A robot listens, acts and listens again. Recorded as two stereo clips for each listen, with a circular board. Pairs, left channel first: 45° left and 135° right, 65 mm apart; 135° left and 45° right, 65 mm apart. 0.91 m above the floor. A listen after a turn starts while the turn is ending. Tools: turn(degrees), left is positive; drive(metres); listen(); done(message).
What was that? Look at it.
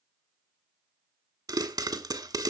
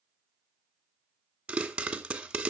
turn(degrees=-120)
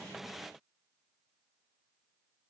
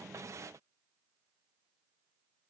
done("Facing where the pop came from. I can't hear it now.")